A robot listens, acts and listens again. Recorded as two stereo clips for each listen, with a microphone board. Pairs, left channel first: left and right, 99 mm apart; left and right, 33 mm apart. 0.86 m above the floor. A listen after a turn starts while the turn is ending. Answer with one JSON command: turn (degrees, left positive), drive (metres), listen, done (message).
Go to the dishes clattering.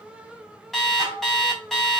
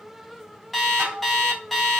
{"turn": -65}
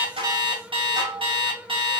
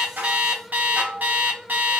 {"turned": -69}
{"turn": -50}
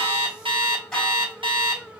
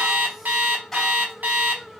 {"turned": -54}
{"listen": true}
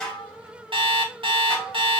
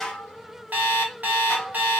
{"drive": 1.0}
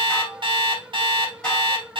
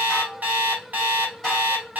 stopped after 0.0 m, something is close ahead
{"listen": true}
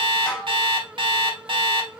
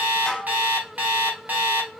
{"turn": 10}
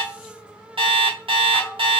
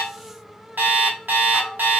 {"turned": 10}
{"done": "Blocked. The dishes clattering is further on, straight ahead."}